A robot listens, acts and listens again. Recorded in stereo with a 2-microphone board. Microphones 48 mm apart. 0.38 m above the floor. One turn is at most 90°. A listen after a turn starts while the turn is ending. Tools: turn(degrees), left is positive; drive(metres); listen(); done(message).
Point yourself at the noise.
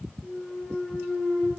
turn(degrees=-30)
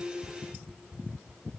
listen()
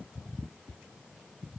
done("I heard a clunk, but can't make it out now. It was about 20° left or 140° right.")